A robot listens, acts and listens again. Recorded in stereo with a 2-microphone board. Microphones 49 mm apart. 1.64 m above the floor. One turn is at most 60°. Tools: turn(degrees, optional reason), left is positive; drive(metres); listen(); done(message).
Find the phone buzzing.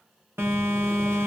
turn(degrees=-55, reason="The phone buzzing: about 55° right or 125° right.")
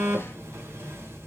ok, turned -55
turn(degrees=-60, reason="So it is at 65° right.")
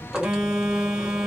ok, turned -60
turn(degrees=-15, reason="The phone buzzing is now 15° right.")
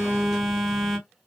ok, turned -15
done("Facing the phone buzzing, 1 to 2 m away.")